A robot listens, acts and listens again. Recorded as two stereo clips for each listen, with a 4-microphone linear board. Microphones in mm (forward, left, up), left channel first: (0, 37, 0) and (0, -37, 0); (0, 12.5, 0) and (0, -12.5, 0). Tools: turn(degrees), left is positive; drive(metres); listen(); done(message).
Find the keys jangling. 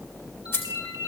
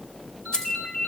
turn(degrees=35)
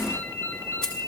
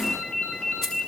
listen()
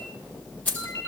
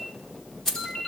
turn(degrees=20)
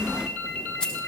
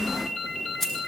turn(degrees=10)
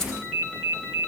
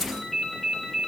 listen()
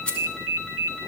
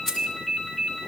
turn(degrees=15)
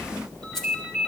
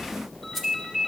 listen()
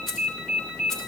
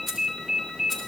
done("Facing the keys jangling, 2 to 4 m away.")